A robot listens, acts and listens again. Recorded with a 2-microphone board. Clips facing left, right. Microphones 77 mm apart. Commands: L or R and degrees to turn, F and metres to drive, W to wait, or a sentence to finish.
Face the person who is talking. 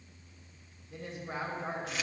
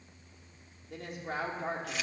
R90
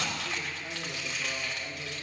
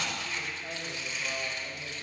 L15
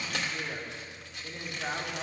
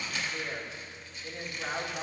Found it: a woman speaking, straight ahead, 2 to 4 m away.